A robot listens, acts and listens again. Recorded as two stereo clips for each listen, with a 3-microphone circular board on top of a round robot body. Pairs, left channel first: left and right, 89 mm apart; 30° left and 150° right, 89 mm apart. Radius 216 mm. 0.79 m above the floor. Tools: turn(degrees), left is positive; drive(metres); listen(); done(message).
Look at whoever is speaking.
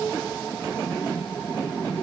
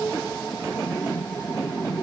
listen()
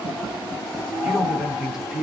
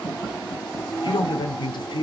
done("Found it: a man speaking, straight ahead, 1 to 2 m away.")